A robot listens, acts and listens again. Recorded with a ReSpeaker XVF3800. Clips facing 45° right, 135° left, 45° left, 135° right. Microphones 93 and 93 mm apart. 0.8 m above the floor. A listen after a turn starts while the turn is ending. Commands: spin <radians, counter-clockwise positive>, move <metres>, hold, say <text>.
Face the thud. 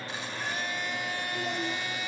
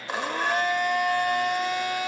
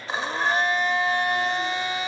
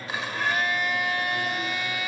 hold
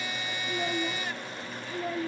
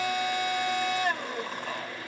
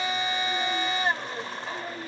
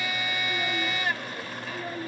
hold
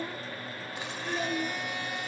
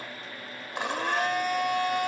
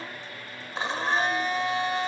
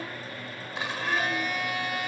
say I can't make out a thud to turn to.